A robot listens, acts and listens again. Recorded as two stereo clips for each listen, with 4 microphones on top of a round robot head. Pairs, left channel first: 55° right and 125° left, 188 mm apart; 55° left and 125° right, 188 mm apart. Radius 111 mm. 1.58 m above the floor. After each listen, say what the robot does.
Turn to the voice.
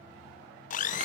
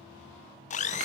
Keep listening.
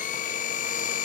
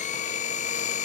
Keep listening.
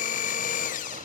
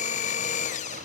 I can't make out anyone speaking to turn to.